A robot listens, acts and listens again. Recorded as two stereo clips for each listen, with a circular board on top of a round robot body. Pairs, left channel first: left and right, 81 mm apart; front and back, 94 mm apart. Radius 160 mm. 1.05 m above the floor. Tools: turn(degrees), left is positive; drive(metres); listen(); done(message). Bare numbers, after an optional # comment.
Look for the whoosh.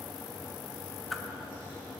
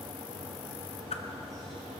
listen()
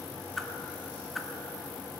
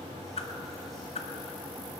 done("Found it: a whoosh, straight ahead, 1 to 2 m away.")